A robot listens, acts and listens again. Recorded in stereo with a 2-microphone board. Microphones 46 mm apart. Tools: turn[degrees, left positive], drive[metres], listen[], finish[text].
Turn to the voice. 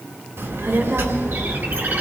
Action: turn[-90]
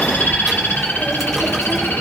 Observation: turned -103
Action: finish[Found it: a child speaking, straight ahead.]